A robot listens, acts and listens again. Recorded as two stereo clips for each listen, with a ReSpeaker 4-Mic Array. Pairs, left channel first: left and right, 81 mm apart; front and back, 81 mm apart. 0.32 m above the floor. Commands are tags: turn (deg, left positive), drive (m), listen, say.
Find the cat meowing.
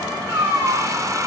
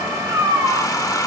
<turn deg="-140"/>
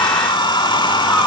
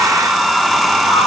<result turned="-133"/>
<listen/>
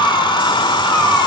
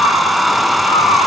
<listen/>
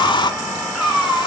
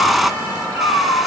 <say>Facing the cat meowing.</say>